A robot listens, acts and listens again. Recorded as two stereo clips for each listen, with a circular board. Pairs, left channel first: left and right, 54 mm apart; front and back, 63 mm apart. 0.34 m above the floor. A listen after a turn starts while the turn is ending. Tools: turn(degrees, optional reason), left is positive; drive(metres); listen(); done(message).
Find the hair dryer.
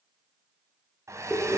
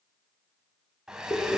turn(degrees=-100, reason="The hair dryer: 100° right.")
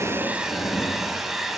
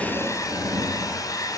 done("Facing the hair dryer, 1 to 2 m away.")